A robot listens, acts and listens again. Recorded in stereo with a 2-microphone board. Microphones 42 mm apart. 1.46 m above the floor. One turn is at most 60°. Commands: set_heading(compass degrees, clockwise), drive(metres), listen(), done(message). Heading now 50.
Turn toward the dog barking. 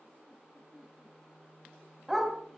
set_heading(80)
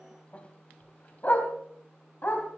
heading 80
set_heading(30)
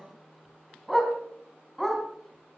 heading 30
done("Facing the dog barking.")